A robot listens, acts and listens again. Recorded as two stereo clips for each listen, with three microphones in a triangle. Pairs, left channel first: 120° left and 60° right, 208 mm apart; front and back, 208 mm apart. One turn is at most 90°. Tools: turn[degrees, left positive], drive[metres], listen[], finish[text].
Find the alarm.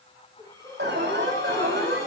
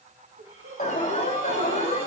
Thought: The alarm: 55° right.
Action: turn[-55]
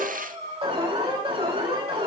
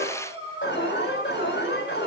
Action: finish[Facing the alarm, over 4 m away.]